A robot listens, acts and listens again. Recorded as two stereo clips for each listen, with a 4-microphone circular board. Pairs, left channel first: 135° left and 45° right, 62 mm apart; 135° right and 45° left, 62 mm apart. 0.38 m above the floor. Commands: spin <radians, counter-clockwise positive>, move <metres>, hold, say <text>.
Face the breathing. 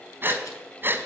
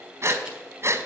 say Found it: breathing, straight ahead, 1 to 2 m away.